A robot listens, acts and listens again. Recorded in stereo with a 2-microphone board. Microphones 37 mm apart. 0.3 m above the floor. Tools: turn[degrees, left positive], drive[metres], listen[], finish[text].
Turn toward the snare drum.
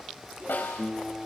Thought: The snare drum: about 70° left or 110° left.
Action: turn[70]
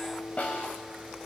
Thought: So it is at 40° left.
Action: turn[40]
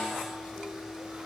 Action: listen[]
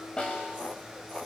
Thought: The snare drum is now 25° left.
Action: turn[25]
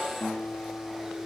Action: listen[]
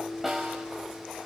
Action: finish[Found it: a snare drum, straight ahead, over 4 m away.]